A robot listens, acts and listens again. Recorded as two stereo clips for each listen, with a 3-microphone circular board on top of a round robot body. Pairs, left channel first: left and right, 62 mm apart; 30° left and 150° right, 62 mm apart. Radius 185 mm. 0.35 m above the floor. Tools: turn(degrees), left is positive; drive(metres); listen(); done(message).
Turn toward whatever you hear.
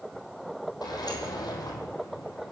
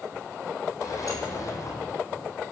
turn(degrees=70)
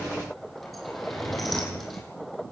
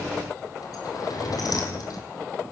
done("Facing the sliding door, over 4 m away.")